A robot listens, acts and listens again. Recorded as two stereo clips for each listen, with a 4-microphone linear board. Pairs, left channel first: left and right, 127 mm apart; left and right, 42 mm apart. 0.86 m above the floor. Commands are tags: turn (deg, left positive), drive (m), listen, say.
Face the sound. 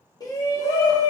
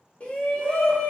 <turn deg="30"/>
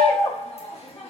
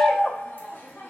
<turn deg="120"/>
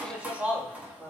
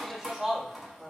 <turn deg="-10"/>
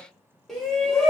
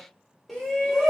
<say>Facing the shout, 1 to 2 m away.</say>